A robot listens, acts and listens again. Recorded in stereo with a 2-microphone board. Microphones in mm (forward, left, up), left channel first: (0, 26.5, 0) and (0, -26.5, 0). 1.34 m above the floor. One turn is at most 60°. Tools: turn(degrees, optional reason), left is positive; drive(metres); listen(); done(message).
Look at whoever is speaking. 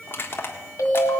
listen()
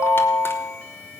listen()
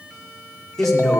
turn(degrees=30)
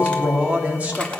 turn(degrees=-30, reason="So it is at 30° right.")
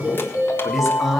done("Facing the man speaking.")